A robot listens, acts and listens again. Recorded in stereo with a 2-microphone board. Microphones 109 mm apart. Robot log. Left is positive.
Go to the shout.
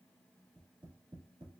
cmd idle
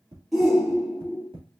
cmd yaw +30
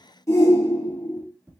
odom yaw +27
note: So it is at 155° left.
cmd yaw +155
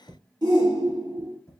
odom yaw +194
note: The shout is now 40° right.
cmd yaw -40
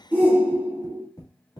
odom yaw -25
note: The shout is now 15° right.
cmd yaw -15
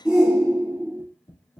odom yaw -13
cmd fwd 1.0
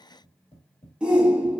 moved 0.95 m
note: The shout is now 10° right.
cmd yaw -10
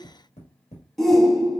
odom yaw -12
cmd fwd 1.0
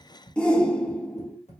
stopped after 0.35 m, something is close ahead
note: The shout is now 10° left.
cmd yaw +10
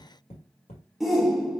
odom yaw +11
end: Arrived at the shout, straight ahead.